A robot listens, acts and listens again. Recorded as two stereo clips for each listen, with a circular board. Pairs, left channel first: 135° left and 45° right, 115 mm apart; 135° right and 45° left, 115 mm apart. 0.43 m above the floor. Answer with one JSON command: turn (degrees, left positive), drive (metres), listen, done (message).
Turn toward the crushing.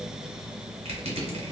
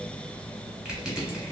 {"turn": -35}
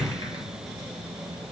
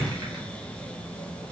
{"done": "Found it: crushing, straight ahead, 1 to 2 m away."}